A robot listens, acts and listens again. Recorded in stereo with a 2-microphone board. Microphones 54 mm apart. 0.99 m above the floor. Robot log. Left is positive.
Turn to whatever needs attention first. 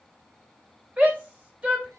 note: The shout: about 25° right or 155° right.
cmd yaw -25
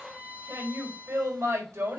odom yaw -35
note: So it is at 120° right.
cmd yaw -120
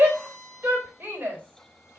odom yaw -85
note: The shout is now 35° right.
cmd yaw -35
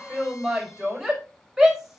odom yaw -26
note: The shout is now 10° right.
cmd yaw -10
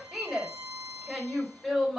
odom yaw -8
end: Facing the shout.